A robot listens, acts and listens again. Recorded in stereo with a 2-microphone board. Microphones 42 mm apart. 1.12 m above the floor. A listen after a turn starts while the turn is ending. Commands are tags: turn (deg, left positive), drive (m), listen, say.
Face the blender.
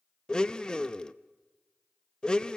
<turn deg="20"/>
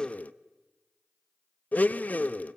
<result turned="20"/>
<turn deg="140"/>
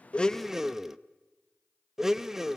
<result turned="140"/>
<turn deg="-10"/>
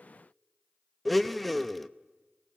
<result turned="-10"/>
<say>Facing the blender, under 1 m away.</say>